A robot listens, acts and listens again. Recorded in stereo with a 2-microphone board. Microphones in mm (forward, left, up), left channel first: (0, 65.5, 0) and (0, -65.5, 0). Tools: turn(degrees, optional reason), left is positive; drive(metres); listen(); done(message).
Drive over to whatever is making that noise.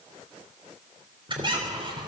turn(degrees=-40, reason="The squeak: about 40° right or 140° right.")
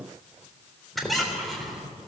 drive(metres=1.0)
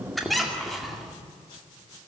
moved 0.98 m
drive(metres=1.0)
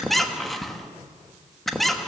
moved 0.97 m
drive(metres=1.0)
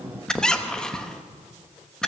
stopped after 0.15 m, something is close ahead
done("I am next to the squeak.")